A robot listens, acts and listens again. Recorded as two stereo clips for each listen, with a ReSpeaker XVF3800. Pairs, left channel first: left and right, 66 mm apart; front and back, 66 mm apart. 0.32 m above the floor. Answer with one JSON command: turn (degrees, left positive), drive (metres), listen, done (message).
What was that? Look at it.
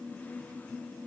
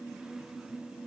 {"listen": true}
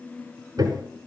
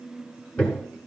{"turn": -75}
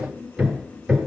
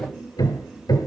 {"done": "Found it: hammering, straight ahead, 1 to 2 m away."}